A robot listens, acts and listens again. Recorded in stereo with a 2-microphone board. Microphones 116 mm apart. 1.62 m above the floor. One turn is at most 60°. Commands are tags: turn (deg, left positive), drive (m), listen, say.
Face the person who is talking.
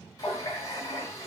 <listen/>
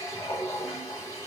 <listen/>
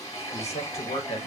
<turn deg="60"/>
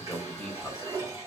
<say>Facing the man speaking, 1 to 2 m away.</say>